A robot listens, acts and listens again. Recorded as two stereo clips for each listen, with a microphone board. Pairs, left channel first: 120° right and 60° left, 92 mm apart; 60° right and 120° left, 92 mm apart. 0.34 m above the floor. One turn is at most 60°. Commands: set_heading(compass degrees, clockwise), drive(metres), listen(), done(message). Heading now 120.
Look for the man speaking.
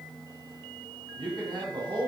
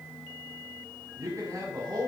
set_heading(60)
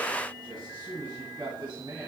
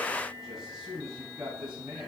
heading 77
set_heading(42)
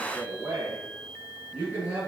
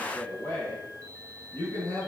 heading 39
done("Facing the man speaking, 2 to 4 m away.")